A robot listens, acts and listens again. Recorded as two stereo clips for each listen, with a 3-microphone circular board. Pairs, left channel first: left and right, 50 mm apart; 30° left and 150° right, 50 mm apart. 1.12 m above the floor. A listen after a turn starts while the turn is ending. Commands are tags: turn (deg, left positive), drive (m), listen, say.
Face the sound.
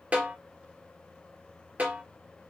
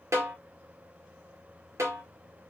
<turn deg="-150"/>
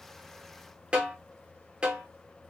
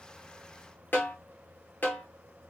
<turn deg="-20"/>
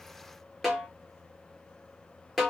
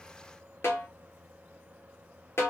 <say>Found it: a snare drum, straight ahead.</say>